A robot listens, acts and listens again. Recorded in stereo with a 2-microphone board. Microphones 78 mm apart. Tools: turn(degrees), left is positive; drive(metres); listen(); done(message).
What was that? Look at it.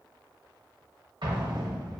turn(degrees=-75)
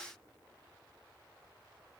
listen()
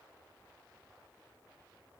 done("I heard an explosion, but can't make it out now. It was about straight ahead or 30° right.")